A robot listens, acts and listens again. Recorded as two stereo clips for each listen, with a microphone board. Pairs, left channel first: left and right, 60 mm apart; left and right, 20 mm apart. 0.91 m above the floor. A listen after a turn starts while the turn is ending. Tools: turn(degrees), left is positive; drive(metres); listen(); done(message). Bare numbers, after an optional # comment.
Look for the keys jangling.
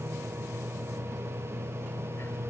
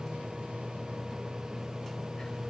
listen()
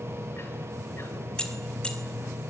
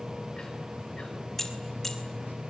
# The keys jangling: about 20° left or 160° left.
turn(20)
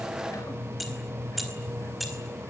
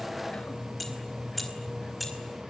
turn(30)
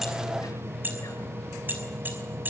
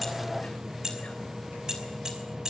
# So it is at 30° right.
turn(-30)
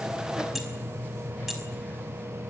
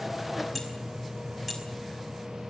done("Facing the keys jangling, over 4 m away.")